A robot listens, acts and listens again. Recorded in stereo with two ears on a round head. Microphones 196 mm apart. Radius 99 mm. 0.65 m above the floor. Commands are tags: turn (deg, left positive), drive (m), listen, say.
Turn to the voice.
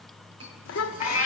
<turn deg="65"/>
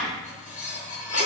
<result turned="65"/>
<listen/>
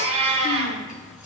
<listen/>
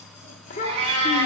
<turn deg="40"/>
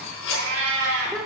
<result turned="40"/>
<say>Facing the child speaking, under 1 m away.</say>